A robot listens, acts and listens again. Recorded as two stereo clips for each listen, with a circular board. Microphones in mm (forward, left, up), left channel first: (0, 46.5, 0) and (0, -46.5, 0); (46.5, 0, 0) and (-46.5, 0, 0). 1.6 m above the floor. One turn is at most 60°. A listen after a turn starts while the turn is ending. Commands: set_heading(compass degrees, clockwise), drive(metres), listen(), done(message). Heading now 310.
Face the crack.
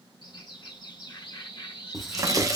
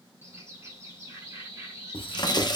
set_heading(350)
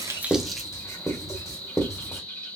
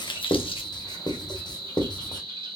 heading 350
done("I heard a crack from this way, but can't make it out now.")